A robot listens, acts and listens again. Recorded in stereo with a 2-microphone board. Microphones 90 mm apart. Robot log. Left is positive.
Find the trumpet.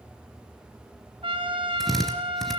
note: The trumpet: about 70° right or 110° right.
cmd yaw -70
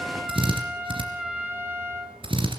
note: So it is at 10° right.
cmd yaw -10
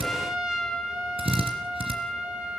end: Found it: a trumpet, straight ahead.